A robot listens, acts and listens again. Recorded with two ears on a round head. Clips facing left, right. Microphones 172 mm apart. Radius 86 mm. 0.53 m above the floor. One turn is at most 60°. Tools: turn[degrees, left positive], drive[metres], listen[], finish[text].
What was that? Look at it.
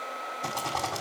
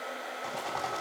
Thought: The rattle: about 60° left or 120° left.
Action: turn[60]
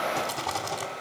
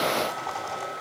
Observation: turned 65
Thought: So it is at 50° left.
Action: turn[50]
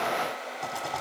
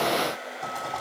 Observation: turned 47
Action: finish[Facing the rattle.]